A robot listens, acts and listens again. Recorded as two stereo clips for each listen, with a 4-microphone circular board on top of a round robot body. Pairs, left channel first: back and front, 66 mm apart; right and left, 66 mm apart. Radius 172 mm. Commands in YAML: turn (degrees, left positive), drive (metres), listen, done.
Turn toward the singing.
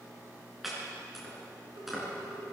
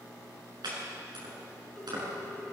listen: true
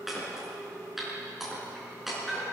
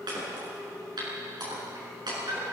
listen: true
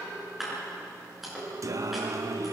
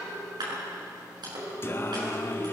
turn: -35
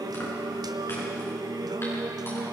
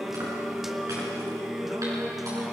done: "Facing the singing, 1 to 2 m away."